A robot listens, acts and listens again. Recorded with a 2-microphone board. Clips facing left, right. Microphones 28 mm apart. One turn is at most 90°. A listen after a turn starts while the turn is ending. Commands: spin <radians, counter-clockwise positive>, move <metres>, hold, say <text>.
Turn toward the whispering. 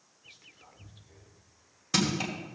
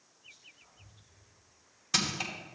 spin 1.05
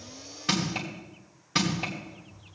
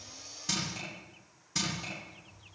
spin 0.70
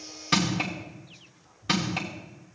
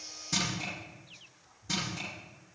spin 0.17
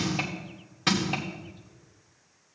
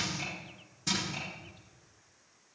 hold
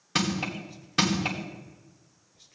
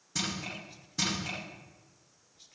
say Facing the whispering, 1 to 2 m away.